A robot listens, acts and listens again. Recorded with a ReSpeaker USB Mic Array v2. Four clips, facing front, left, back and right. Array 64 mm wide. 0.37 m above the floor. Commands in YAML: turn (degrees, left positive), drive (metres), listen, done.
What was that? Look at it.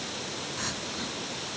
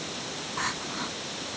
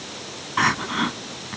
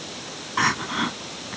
turn: -150
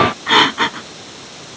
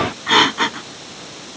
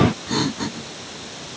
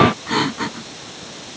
turn: 30
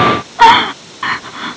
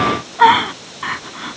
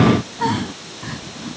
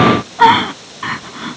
done: "Found it: crying, straight ahead."